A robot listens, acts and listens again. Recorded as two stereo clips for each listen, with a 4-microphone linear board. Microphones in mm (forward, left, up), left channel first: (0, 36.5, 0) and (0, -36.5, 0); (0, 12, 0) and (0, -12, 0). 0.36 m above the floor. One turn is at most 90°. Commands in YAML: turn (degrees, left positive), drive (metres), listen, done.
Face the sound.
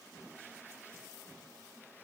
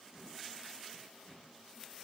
listen: true
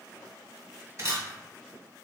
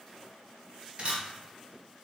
turn: -50
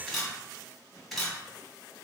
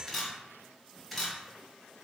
done: "Found it: a camera shutter, straight ahead."